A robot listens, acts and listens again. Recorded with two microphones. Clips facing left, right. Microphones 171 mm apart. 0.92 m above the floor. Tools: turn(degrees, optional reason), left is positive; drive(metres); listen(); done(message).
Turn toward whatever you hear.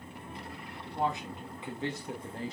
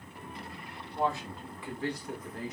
turn(degrees=30, reason="The man speaking: about 30° left or 150° left.")
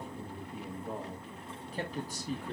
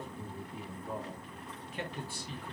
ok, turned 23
turn(degrees=45, reason="The man speaking: about 45° left or 135° left.")
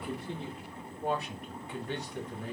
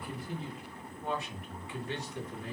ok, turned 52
turn(degrees=40, reason="So it is at 40° left.")
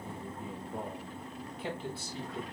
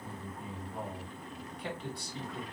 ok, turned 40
done("Facing the man speaking.")